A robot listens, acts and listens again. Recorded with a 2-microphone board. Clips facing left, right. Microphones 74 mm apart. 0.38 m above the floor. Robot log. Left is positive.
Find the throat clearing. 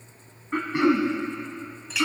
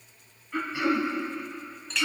note: The throat clearing: about 50° left or 130° left.
cmd yaw +50
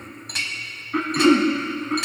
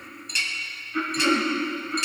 note: So it is at 80° left.
cmd yaw +80
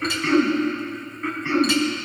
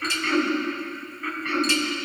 note: The throat clearing is now 10° left.
cmd yaw +10
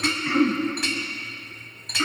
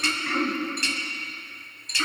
end: Found it: throat clearing, straight ahead, 1 to 2 m away.